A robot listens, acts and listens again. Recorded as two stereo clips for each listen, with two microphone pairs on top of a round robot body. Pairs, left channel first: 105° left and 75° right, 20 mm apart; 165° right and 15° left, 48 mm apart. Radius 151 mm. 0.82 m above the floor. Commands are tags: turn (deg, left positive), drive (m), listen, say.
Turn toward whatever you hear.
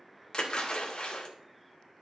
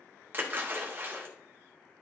<turn deg="55"/>
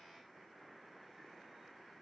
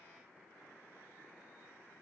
<say>Facing where the splash came from. I can't hear it now.</say>